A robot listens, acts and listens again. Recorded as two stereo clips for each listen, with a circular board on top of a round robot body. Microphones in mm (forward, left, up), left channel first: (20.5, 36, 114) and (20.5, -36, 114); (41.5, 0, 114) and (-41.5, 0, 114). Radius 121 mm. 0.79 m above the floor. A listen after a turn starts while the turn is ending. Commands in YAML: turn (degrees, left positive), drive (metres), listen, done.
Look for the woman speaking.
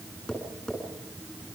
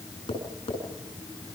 listen: true
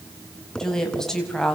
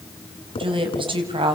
turn: 175
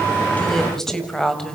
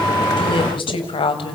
turn: 10
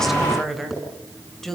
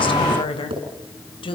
done: "Facing the woman speaking."